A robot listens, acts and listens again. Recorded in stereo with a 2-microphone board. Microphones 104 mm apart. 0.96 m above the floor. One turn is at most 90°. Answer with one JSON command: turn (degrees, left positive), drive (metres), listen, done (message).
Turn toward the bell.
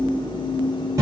{"listen": true}
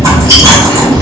{"listen": true}
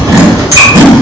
{"done": "I can't make out a bell, only chewing."}